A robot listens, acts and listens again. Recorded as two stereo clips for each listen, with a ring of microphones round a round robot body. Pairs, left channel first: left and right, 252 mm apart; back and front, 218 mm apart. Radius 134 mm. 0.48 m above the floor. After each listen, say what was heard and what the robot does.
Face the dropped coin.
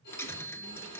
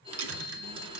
The dropped coin: 10° left. Turn 10° left.
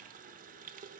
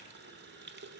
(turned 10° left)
Facing where the dropped coin came from. I can't hear it now.